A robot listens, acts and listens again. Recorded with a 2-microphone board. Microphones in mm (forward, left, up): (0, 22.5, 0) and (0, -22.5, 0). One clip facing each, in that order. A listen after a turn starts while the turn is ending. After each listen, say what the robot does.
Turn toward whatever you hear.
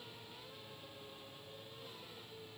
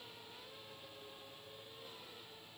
Keep listening.
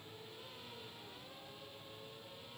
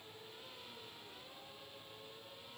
Keep listening.
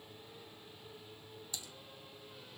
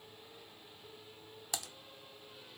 Turn 70° right.
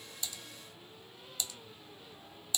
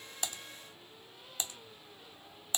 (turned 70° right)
Turn 35° right.
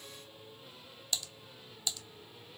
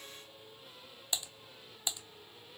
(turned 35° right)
Turn 25° right.
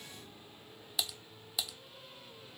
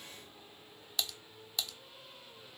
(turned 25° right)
Facing the typing on a keyboard.